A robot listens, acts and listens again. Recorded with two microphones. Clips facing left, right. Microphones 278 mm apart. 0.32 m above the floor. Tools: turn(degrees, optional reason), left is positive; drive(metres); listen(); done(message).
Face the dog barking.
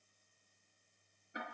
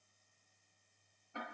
listen()
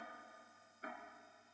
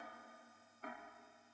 listen()
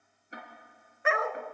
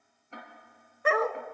turn(degrees=-40, reason="The dog barking: about 40° right or 140° right.")
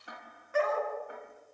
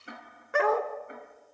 turn(degrees=-100, reason="So it is at 100° right.")
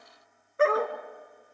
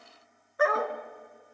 turn(degrees=30, reason="The dog barking is now 30° left.")
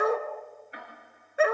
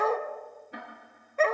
turn(degrees=10, reason="The dog barking is now 10° left.")
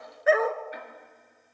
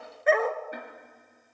done("Facing the dog barking, 1 to 2 m away.")